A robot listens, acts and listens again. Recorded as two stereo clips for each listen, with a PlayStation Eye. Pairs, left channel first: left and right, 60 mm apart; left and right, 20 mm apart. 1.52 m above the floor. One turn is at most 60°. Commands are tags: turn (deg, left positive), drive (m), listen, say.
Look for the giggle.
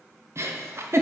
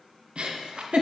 <turn deg="-50"/>
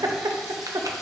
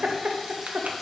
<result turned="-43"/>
<turn deg="-60"/>
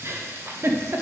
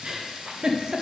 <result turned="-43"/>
<turn deg="-45"/>
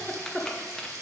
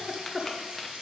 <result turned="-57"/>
<turn deg="10"/>
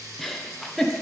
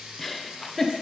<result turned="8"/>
<say>Found it: a giggle, straight ahead.</say>